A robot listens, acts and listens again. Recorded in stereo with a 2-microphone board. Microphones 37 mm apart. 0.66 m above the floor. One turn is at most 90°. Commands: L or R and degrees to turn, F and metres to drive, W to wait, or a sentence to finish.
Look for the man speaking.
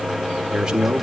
R30
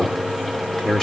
L20
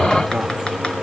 W
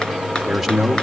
Facing the man speaking, 1 to 2 m away.